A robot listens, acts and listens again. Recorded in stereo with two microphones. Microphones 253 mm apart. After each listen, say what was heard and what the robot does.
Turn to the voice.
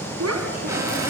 Turn 90° right.
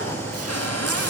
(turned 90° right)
Keep listening.
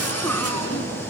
Keep listening.
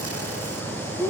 The child speaking is now 10° left. Turn 10° left.
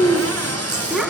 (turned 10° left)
Found it: a child speaking, straight ahead, over 4 m away.